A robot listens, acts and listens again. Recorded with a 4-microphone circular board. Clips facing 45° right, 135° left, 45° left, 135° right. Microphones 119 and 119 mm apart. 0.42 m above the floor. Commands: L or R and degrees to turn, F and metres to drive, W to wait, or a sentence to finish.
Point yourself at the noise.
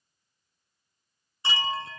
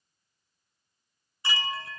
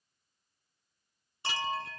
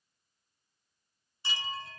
L20
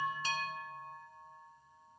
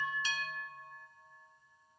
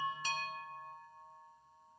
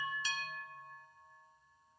Facing the chime, under 1 m away.